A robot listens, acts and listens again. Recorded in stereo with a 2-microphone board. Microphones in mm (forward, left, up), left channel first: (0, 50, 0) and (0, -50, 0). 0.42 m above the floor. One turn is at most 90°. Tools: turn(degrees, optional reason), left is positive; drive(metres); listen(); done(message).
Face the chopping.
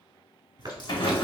turn(degrees=-45, reason="The chopping: about 45° right or 135° right.")
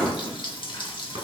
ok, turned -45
listen()
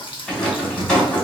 listen()
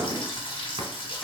done("I heard chopping, but can't make it out now. It was about straight ahead or 90° right.")